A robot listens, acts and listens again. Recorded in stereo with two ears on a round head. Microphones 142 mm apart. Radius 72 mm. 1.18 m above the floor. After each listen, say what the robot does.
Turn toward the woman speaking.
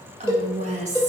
Turn 45° right.
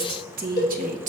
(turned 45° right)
Turn 50° right.
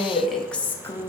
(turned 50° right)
Turn 20° left.
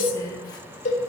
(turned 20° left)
Turn 20° left.
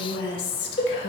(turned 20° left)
Turn 35° left.
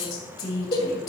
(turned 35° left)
Turn 25° left.
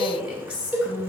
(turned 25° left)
Found it: a woman speaking, straight ahead, 2 to 4 m away.